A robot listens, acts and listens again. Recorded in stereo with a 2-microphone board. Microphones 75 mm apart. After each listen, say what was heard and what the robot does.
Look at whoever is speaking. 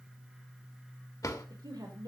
The woman speaking: about 75° right or 105° right. Turn 75° right.
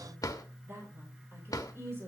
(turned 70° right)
So it is at 35° right. Turn 35° right.
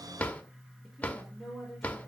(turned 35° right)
Facing the woman speaking, over 4 m away.